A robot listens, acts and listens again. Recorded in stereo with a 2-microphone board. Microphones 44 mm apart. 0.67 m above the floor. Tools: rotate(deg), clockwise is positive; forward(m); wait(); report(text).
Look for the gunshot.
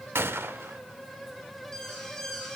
rotate(70)
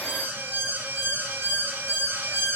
wait()
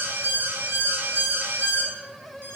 report("I heard a gunshot, but can't make it out now. It was about straight ahead or 40° right.")